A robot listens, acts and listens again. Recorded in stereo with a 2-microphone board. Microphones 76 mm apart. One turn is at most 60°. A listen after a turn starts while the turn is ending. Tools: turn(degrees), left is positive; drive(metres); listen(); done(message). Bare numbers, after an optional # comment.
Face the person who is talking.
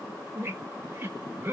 listen()
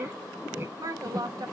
# The woman speaking: about 55° right or 125° right.
turn(-55)
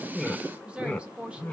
# So it is at 20° right.
turn(-20)
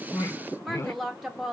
done("Found it: a woman speaking, straight ahead, 1 to 2 m away.")